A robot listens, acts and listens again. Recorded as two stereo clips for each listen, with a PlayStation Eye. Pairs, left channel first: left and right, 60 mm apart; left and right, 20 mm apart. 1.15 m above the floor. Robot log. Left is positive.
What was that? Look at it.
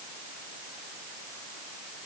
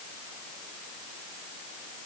cmd idle
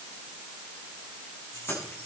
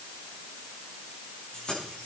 note: The keys jangling: about 45° left or 135° left.
cmd yaw +45
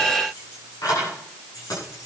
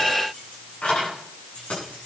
note: So it is at 90° left.
cmd yaw +90
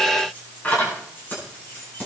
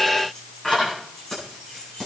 note: The keys jangling is now 30° left.
cmd yaw +30
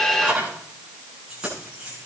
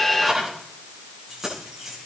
note: The keys jangling is now 15° right.
cmd yaw -15
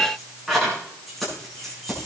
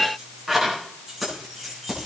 end: Facing the keys jangling.